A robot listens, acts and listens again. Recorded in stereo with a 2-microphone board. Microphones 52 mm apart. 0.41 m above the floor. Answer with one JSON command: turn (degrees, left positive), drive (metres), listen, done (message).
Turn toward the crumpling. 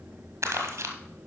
{"turn": -55}
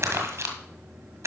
{"turn": -65}
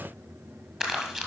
{"turn": -10}
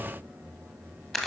{"done": "Facing the crumpling, 1 to 2 m away."}